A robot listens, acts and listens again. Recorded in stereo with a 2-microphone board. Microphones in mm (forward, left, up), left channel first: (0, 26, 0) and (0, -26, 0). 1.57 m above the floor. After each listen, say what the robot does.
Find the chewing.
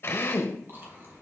Turn 40° right.
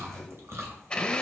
Turn 90° right.
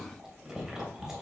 Turn 10° right.
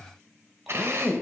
Keep listening.
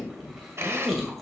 Found it: chewing, straight ahead, 2 to 4 m away.